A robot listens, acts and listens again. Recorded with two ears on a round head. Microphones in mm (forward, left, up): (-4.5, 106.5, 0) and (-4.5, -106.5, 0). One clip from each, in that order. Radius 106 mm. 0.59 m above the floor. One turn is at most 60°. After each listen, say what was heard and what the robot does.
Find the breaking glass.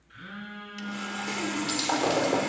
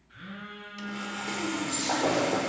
Turn 60° left.
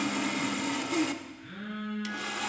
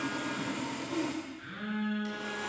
Nothing new. It was at 30° left. Turn 30° left.
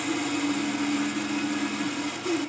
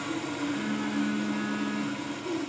I heard breaking glass from this way, but can't make it out now.